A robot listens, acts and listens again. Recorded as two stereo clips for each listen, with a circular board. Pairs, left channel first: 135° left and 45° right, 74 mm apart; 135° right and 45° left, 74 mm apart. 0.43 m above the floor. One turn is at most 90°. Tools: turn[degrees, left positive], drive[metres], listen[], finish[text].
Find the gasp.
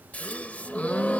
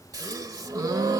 Thought: The gasp: 65° left.
Action: turn[65]
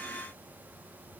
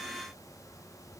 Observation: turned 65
Action: finish[Facing where the gasp came from. I can't hear it now.]